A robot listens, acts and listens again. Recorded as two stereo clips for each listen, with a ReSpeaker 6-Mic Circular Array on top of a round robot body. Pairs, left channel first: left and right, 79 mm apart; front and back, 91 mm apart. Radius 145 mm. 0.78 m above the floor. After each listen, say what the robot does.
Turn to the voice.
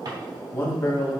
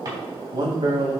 Turn 150° left.
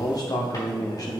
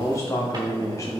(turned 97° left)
Turn 55° left.
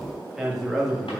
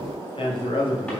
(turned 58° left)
Found it: a man speaking, straight ahead, 1 to 2 m away.